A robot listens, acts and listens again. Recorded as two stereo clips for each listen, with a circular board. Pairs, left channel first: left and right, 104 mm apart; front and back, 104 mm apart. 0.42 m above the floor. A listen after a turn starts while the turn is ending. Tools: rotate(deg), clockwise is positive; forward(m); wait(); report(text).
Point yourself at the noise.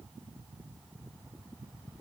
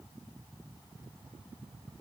wait()
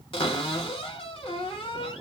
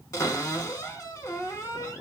rotate(-60)
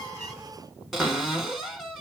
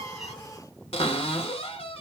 report("Found it: a cupboard door, straight ahead, 1 to 2 m away.")